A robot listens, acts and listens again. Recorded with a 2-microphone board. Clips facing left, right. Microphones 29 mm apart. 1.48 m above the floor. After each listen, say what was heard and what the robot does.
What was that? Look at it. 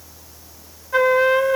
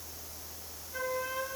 The flute: about 70° left or 110° left. Turn 70° left.
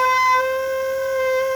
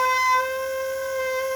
So it is at 10° left. Turn 10° left.
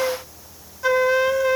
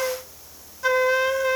Facing the flute, under 1 m away.